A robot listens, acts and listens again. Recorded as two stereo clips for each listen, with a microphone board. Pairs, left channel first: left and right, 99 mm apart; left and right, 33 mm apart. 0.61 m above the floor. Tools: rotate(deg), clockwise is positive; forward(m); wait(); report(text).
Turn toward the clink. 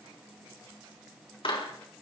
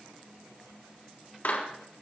wait()
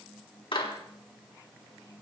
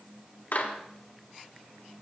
wait()
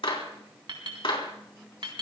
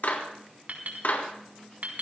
rotate(55)
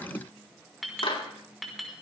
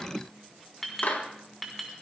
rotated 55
report("Facing the clink, over 4 m away.")